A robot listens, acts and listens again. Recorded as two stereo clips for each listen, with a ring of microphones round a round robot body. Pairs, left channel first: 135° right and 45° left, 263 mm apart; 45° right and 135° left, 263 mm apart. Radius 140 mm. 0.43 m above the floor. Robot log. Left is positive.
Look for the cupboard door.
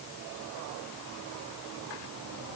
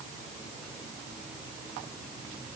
cmd idle
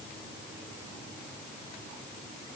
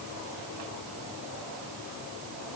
cmd idle
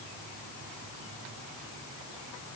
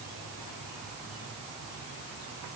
end: I can't make out a cupboard door.